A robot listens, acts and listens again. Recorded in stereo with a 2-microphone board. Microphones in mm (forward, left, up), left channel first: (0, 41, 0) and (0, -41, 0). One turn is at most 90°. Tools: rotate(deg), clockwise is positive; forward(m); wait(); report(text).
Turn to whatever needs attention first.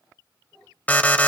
rotate(-20)
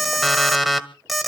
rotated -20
report("Found it: an alarm, straight ahead, 1 to 2 m away.")